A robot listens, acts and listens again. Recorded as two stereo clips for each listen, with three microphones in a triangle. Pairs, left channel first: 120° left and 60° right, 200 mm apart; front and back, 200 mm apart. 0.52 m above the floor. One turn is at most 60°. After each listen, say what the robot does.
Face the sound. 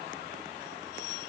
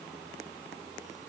Keep listening.
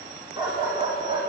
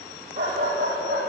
Turn 60° right.
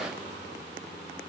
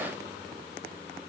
Turn 60° right.
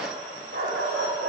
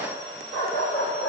Turn 25° right.
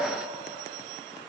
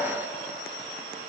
Keep listening.
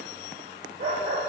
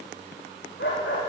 Found it: a dog barking, straight ahead.